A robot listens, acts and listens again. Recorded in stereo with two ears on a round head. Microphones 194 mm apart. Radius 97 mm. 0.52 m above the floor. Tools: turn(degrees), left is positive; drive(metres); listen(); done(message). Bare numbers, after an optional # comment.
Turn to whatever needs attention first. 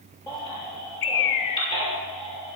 # The baby crying: about 20° left or 160° left.
turn(20)
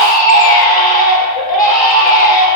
# So it is at 140° left.
turn(140)
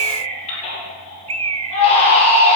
# The baby crying is now 25° left.
turn(25)
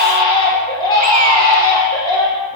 # The baby crying is now 20° left.
turn(20)
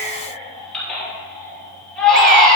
done("Facing the baby crying, 2 to 4 m away.")